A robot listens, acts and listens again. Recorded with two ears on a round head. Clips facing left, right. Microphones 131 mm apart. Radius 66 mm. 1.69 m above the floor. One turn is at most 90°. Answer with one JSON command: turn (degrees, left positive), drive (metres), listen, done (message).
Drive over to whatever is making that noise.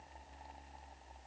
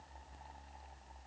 {"listen": true}
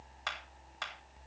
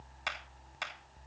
{"turn": -20}
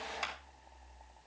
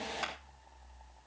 {"drive": 1.0}
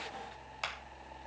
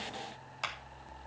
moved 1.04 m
{"drive": 1.0}
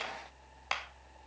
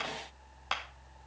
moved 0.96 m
{"drive": 1.0}
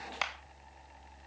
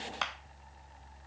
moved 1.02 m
{"turn": 10}
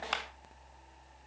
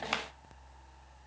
{"drive": 1.0}
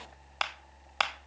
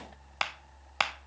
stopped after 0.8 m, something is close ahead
{"done": "I am next to the clap."}